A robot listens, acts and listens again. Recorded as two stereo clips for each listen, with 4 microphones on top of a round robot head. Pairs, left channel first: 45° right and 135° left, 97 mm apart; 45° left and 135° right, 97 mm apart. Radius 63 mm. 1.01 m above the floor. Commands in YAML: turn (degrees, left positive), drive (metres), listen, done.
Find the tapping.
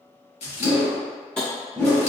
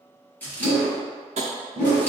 turn: -125
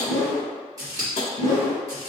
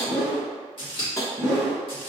turn: -15
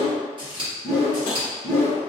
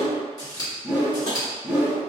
listen: true
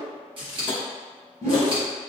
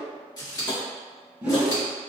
done: "Facing the tapping."